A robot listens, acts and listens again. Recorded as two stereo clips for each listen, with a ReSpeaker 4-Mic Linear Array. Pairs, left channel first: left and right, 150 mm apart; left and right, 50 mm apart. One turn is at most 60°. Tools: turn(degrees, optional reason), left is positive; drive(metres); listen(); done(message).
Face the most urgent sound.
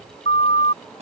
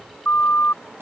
turn(degrees=40, reason="The siren: about 40° left or 140° left.")
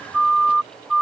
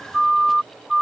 done("Found it: a siren, straight ahead.")